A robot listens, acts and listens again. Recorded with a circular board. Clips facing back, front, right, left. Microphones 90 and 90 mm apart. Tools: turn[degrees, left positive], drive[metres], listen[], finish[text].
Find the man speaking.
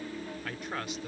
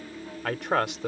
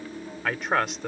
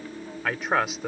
Action: finish[Facing the man speaking.]